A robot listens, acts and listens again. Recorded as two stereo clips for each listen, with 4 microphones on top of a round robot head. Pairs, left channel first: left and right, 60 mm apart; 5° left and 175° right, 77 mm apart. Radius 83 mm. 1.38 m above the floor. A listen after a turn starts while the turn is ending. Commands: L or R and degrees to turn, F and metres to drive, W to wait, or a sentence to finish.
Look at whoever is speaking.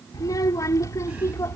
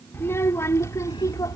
L50
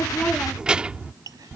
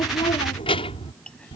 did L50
R30
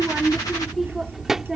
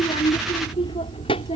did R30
R10
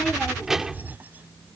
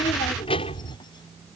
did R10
R15
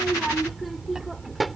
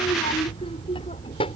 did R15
Facing the child speaking.